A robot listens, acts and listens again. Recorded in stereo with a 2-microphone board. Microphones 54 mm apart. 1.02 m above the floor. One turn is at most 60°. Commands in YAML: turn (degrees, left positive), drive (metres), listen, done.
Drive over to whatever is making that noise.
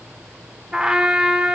turn: -20
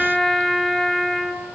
drive: 1.0
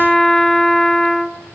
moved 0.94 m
drive: 1.0
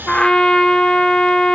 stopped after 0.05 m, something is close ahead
turn: 15
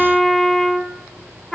done: "I am next to the trumpet."